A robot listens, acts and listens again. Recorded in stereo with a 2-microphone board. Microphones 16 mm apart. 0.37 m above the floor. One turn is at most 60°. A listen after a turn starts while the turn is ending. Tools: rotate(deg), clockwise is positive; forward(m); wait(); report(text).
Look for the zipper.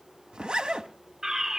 rotate(60)
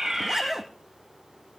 rotate(20)
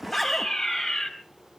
wait()
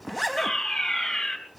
report("Found it: a zipper, straight ahead, 1 to 2 m away.")